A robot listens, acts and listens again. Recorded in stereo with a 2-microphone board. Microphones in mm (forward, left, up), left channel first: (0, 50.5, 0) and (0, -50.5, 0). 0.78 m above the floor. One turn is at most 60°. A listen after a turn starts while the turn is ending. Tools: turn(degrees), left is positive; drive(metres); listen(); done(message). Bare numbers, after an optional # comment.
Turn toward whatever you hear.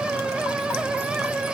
listen()
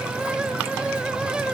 listen()
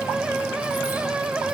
done("I can't make out anything.")